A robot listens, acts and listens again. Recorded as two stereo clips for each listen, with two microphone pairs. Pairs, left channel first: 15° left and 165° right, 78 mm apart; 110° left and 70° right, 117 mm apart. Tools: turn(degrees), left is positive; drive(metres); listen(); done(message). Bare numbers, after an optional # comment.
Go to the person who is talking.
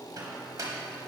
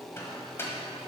listen()
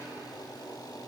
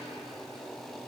listen()
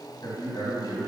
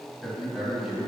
# The man speaking: 15° left.
turn(15)
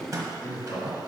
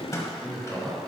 # The man speaking is now 10° left.
turn(10)
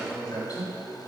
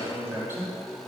drive(1.0)
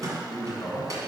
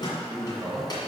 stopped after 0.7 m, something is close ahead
# The man speaking is now 10° right.
turn(-10)
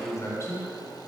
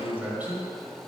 done("I am next to the man speaking.")